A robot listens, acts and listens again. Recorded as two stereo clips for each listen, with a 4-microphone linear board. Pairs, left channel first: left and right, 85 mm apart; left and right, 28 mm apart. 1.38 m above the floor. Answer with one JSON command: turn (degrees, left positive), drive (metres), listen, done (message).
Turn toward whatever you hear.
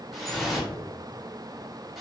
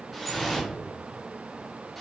{"turn": 30}
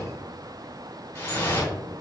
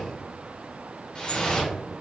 {"turn": 150}
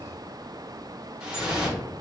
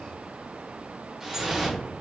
{"turn": -10}
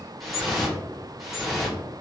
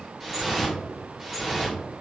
{"done": "Facing the dripping, under 1 m away."}